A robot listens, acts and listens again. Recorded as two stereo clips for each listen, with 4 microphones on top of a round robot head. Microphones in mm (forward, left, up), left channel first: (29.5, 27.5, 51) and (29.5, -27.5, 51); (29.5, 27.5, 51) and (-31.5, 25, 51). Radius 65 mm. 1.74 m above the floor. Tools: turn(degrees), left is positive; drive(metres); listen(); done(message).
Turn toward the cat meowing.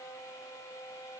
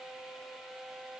listen()
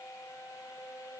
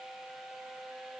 listen()
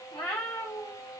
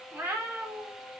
turn(degrees=135)
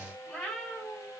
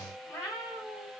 turn(degrees=25)
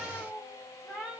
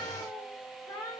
done("Facing the cat meowing, 2 to 4 m away.")